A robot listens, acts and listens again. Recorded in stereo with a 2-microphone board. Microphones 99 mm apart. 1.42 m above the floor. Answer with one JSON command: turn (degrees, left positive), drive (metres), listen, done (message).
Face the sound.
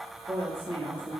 {"turn": -25}
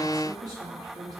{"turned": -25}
{"turn": -140}
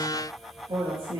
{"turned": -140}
{"turn": -50}
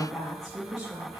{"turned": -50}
{"turn": -10}
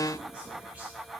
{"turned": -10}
{"listen": true}
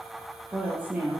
{"turn": -15}
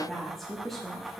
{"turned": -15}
{"done": "Found it: a woman speaking, straight ahead."}